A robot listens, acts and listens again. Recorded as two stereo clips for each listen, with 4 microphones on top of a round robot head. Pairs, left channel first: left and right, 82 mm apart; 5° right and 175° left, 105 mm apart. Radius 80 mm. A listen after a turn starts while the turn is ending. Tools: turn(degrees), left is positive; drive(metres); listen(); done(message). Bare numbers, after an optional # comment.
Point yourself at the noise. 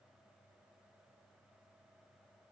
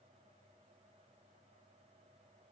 listen()
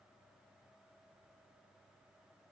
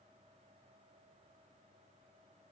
listen()
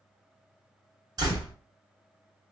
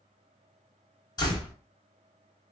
# The door slam: 55° right.
turn(-55)
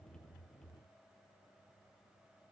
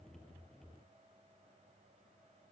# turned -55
done("Facing where the door slam came from. I can't hear it now.")